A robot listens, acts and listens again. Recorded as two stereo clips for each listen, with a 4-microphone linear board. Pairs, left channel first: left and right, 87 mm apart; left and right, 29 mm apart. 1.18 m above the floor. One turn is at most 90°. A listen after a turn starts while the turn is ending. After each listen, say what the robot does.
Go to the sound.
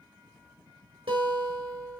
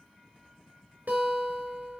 Turn 90° right.
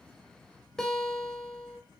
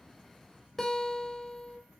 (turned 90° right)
Turn 10° left.
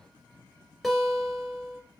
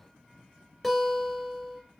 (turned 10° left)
Drive 1.0 m forward.
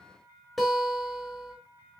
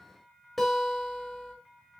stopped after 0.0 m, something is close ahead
Something is in my way. I am facing the guitar but have not reached it.